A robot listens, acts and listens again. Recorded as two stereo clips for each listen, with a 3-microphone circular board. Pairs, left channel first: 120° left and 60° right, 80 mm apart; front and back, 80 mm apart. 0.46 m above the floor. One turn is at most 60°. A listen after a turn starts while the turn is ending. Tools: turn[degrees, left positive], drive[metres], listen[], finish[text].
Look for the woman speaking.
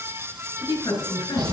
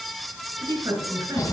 Thought: The woman speaking: 155° left.
Action: turn[60]
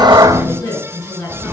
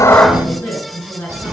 Thought: The woman speaking is now 80° left.
Action: turn[60]
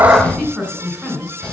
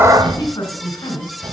Thought: The woman speaking is now 35° left.
Action: turn[35]
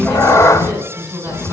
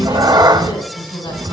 Action: finish[Facing the woman speaking, 2 to 4 m away.]